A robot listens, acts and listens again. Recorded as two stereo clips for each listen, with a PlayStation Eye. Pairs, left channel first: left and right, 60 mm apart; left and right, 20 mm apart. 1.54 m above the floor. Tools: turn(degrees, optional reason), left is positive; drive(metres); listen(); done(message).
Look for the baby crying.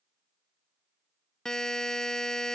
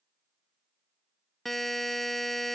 listen()
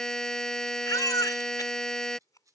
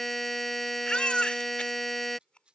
turn(degrees=75, reason="The baby crying: about 75° left or 105° left.")
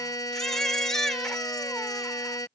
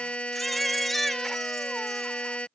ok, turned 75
done("Facing the baby crying.")